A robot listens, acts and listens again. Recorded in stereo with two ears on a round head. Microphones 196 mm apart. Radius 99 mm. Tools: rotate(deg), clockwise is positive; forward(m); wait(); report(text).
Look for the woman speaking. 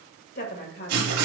rotate(-50)
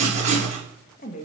rotate(-35)
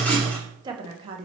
rotate(25)
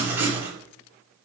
wait()
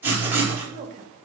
rotate(35)
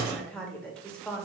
report("Found it: a woman speaking, straight ahead.")